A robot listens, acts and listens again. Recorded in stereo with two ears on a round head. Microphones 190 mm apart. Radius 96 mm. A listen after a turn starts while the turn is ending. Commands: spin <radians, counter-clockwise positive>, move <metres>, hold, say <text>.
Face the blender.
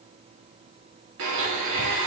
spin -1.22
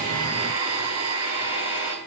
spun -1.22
spin -0.70
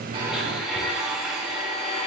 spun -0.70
say Found it: a blender, straight ahead.